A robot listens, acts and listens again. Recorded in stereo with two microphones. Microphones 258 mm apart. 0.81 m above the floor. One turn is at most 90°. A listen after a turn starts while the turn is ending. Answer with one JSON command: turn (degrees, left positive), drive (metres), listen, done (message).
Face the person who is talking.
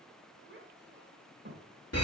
{"turn": -40}
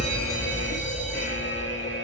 {"listen": true}
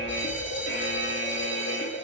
{"listen": true}
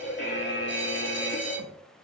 {"done": "I heard a child speaking, but can't make it out now. It was about straight ahead or 100° right."}